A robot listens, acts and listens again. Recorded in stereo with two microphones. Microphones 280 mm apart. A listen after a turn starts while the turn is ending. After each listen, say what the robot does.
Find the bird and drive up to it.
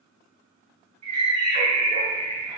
Turn 90° right.
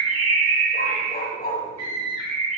Drive 1.0 m forward.
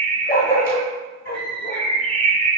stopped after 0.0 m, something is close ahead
Something is in my way. I am facing the bird but have not reached it.